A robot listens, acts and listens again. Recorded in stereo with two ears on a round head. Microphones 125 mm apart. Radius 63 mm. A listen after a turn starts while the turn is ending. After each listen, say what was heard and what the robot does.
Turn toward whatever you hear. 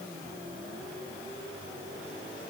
Keep listening.
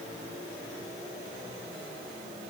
Keep listening.
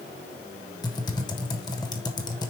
The typing on a keyboard: about 30° left or 150° left. Turn 30° left.
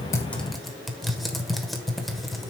Facing the typing on a keyboard.